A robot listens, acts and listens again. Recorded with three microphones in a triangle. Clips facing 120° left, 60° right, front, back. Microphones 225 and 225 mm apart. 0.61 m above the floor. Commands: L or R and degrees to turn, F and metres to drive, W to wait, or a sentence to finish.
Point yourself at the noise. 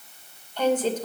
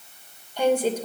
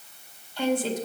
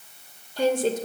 R140
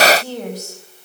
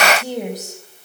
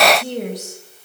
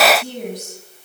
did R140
L10
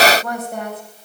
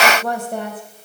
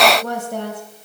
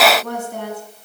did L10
Facing the woman speaking, 2 to 4 m away.